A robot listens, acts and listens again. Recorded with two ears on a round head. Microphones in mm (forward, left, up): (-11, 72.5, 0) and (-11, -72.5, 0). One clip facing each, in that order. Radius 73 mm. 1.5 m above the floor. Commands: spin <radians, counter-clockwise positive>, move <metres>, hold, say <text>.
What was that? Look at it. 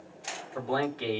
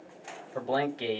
spin -0.44
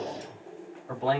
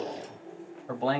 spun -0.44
spin -2.36
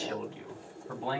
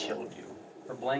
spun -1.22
spin -1.22
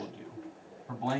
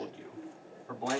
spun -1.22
say Facing the man speaking, 2 to 4 m away.